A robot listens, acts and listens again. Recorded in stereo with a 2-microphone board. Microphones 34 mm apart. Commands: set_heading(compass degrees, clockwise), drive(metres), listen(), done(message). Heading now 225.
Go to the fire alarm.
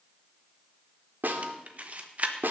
listen()
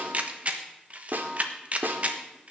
listen()
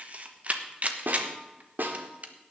done("I can't make out a fire alarm to turn to.")